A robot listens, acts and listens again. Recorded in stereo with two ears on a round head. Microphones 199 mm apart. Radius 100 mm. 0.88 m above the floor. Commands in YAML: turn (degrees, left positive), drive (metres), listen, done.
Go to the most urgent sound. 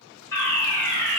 turn: 30
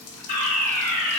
turn: 135
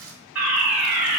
turn: -10
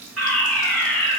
drive: 1.0
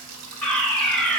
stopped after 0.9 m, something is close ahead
done: "Arrived at the fire alarm, straight ahead."